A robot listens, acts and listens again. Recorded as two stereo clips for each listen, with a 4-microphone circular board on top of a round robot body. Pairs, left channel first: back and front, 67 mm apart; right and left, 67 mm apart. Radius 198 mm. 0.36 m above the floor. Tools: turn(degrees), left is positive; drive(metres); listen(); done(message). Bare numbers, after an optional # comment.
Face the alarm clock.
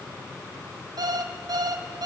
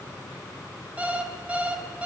# The alarm clock: 20° left.
turn(20)
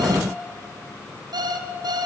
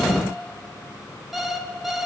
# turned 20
done("Found it: an alarm clock, straight ahead, 2 to 4 m away.")